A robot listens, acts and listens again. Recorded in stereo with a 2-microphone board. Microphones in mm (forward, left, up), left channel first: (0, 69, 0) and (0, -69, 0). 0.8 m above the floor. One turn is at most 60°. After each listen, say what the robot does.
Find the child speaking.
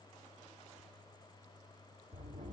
Keep listening.
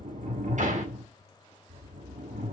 Keep listening.
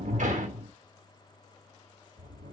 I can't make out a child speaking, only a sliding door.